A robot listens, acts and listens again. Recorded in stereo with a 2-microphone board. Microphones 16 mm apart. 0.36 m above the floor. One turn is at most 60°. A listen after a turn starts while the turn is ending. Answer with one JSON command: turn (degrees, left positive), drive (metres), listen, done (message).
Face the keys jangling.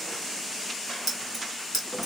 {"turn": -30}
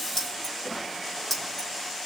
{"turn": 20}
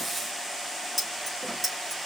{"done": "Found it: keys jangling, straight ahead, over 4 m away."}